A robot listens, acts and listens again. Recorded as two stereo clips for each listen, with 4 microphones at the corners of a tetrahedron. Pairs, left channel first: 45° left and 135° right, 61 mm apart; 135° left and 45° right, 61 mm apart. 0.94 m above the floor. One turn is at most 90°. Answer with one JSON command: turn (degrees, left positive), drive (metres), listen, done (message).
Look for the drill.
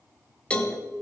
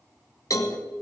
{"listen": true}
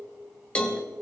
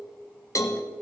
{"listen": true}
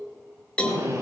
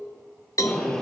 {"turn": -90}
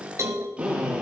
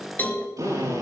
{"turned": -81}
{"turn": -65}
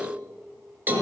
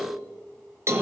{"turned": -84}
{"turn": 15}
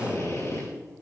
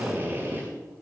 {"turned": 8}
{"turn": 10}
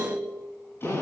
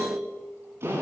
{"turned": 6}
{"done": "Facing the drill, over 4 m away."}